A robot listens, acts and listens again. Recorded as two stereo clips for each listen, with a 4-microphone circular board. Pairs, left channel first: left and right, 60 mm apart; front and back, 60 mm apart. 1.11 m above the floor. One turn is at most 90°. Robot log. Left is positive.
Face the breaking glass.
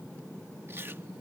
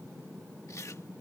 cmd idle
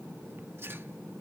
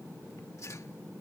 cmd idle
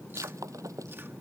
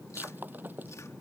note: The breaking glass: 120° right.
cmd yaw -90
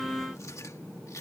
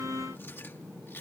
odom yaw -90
note: Nothing new. It was at 30° right.
cmd yaw -30
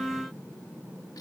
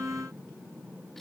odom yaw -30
end: Facing where the breaking glass came from. I can't hear it now.